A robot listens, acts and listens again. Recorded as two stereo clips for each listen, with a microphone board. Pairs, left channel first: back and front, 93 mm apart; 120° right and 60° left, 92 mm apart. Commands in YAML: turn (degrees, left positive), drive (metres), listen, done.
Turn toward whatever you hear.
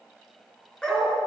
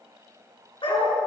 turn: -100
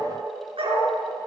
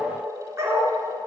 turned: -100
done: "Facing the dog barking."